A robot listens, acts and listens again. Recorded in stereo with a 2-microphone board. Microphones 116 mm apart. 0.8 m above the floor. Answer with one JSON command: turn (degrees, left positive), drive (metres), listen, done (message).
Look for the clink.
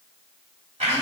{"listen": true}
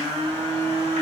{"listen": true}
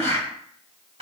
{"done": "I can't make out a clink, only a blender."}